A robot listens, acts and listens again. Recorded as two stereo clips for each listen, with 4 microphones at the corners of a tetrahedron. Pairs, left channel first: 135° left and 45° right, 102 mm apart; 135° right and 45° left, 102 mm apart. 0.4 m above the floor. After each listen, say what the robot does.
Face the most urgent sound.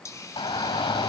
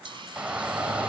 Turn 120° left.
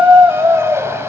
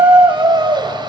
Turn 15° left.
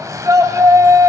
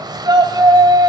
Found it: a shout, straight ahead, 2 to 4 m away.